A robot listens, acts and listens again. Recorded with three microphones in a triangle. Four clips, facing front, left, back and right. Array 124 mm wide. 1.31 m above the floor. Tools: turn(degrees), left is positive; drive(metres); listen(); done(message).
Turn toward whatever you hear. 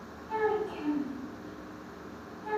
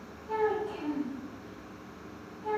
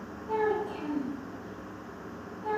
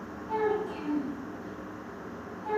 turn(degrees=-165)
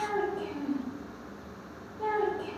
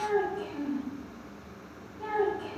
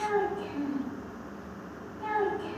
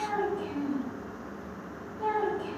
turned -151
turn(degrees=-15)
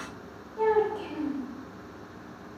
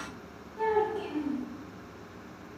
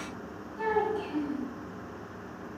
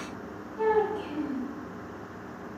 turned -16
done("Found it: a child speaking, straight ahead.")